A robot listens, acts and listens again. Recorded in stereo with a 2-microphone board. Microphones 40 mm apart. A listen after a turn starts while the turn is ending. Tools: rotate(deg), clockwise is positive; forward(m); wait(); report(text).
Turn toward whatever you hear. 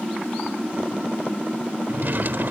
rotate(60)
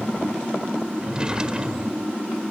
rotate(30)
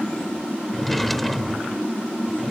report("Found it: a drawer, straight ahead.")